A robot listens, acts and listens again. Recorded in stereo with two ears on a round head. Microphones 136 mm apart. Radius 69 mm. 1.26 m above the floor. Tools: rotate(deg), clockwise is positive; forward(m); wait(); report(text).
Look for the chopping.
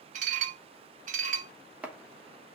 rotate(30)
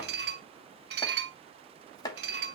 rotate(-25)
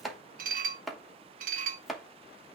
report("Found it: chopping, straight ahead, 1 to 2 m away.")